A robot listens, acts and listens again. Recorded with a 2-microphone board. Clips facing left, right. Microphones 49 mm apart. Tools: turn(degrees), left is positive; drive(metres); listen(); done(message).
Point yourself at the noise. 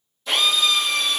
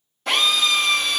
turn(degrees=-60)
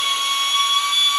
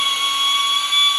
turn(degrees=-35)
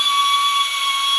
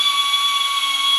done("Found it: a drill, straight ahead, 1 to 2 m away.")